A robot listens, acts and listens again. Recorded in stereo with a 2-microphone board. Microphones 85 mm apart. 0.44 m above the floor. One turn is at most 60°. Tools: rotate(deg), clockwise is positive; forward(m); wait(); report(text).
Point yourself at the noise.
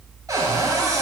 rotate(45)
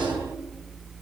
rotate(60)
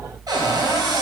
rotate(50)
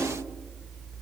wait()
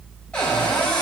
rotate(-15)
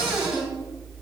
report("Found it: a cupboard door, straight ahead, 2 to 4 m away.")